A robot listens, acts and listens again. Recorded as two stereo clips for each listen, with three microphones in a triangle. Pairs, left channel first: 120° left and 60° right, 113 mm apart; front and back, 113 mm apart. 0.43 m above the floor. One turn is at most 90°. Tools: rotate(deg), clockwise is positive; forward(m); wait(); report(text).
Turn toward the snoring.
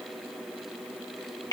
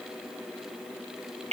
wait()
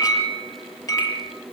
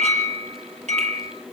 wait()
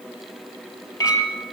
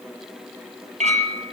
report("I can't make out snoring to turn to.")